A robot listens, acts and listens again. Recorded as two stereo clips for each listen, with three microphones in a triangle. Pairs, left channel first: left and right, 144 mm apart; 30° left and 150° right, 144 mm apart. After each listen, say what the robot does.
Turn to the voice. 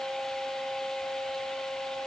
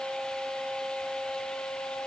Keep listening.
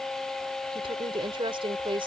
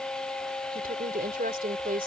Turn 145° right.
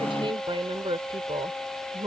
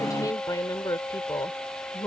Turn 35° right.
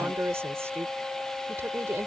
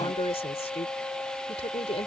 Turn 20° right.
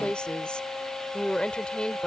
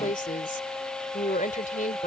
Found it: a woman speaking, straight ahead.